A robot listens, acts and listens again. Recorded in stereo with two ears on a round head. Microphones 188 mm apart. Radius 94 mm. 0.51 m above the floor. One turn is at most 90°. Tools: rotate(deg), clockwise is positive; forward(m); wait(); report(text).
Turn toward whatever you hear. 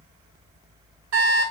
rotate(70)
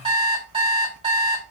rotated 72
rotate(30)
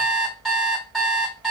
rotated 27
report("Facing the alarm clock, 1 to 2 m away.")